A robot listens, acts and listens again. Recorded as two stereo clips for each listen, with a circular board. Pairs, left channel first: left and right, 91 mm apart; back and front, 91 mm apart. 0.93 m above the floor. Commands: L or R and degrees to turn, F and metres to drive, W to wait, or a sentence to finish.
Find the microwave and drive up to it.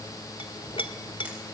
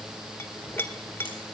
W
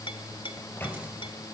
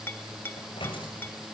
L160
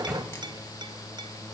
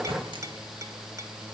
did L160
R10
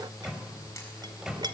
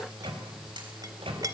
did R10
F1.0
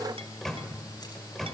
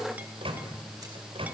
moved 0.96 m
F1.0
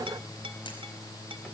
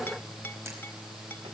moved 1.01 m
W
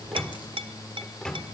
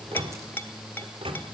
L10
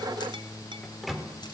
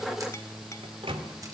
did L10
F1.0
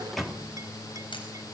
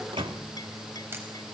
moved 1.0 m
F1.0
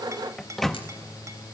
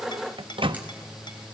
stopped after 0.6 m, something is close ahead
Arrived at the microwave, straight ahead.